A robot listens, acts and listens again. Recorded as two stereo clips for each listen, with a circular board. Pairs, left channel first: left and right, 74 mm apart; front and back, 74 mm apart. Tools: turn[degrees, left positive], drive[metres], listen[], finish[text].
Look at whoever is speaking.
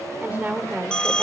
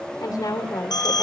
Thought: The woman speaking: 25° right.
Action: turn[-25]
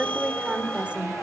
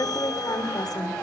Thought: The woman speaking is now 20° right.
Action: turn[-20]
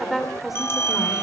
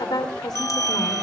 Action: finish[Found it: a woman speaking, straight ahead, 2 to 4 m away.]